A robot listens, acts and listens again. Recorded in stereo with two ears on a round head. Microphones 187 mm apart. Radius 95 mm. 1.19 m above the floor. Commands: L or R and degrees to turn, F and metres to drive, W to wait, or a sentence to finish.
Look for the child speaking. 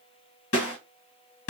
W
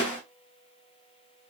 W
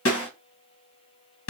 I can't make out a child speaking, only a snare drum.